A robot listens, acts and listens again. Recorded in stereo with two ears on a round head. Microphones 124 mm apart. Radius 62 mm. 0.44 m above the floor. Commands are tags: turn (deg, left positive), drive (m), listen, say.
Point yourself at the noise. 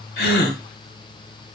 <turn deg="90"/>
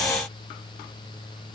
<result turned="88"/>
<say>I heard a gasp from this way, but can't make it out now.</say>